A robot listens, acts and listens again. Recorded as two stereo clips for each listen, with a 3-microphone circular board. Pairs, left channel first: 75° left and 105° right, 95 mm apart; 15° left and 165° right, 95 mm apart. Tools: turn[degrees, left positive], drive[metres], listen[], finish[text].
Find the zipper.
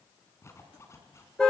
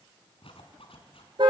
Thought: The zipper: 15° left.
Action: turn[15]
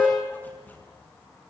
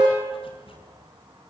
Action: listen[]
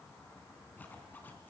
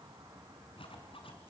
Action: finish[Facing the zipper.]